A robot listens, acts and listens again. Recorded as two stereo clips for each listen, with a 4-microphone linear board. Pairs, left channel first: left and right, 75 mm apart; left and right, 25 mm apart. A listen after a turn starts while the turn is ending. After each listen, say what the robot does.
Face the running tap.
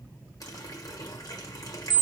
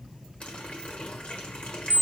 Turn 55° left.
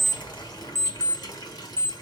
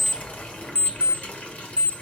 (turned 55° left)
Turn 65° left.
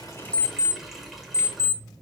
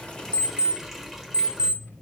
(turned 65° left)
Facing the running tap, 1 to 2 m away.